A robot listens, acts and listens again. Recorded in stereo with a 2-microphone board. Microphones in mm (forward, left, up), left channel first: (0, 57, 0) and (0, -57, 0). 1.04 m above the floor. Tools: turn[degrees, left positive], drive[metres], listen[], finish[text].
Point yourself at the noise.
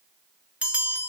Action: turn[-30]
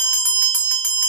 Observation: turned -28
Thought: So it is at 15° left.
Action: turn[15]
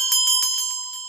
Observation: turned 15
Action: finish[Facing the bell.]